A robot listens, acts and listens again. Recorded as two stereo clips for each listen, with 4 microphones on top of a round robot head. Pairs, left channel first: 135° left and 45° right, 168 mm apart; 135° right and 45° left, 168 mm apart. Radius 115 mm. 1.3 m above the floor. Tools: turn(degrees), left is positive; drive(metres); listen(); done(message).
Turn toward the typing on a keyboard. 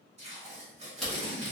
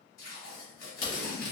turn(degrees=-140)
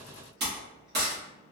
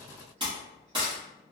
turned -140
turn(degrees=-15)
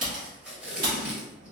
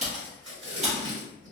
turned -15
done("Facing the typing on a keyboard.")